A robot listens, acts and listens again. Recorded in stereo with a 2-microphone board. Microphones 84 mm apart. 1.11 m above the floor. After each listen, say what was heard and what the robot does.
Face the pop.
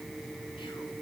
Keep listening.
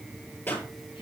The pop: about 25° left or 155° left. Turn 25° left.
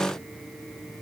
Keep listening.
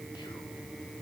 I heard a pop, but can't make it out now. It was about straight ahead or 130° left.